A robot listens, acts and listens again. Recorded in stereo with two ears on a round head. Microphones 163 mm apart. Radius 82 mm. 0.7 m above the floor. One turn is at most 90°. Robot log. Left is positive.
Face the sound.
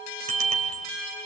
note: The bicycle bell: about 35° right or 145° right.
cmd yaw -35
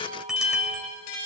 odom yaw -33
end: Facing the bicycle bell, 2 to 4 m away.